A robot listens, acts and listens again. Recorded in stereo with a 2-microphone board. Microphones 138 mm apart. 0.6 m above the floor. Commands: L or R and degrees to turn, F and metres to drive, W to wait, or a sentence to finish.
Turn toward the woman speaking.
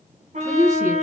R20
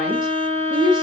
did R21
R30
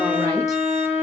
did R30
W
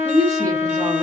L20
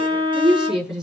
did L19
Facing the woman speaking, over 4 m away.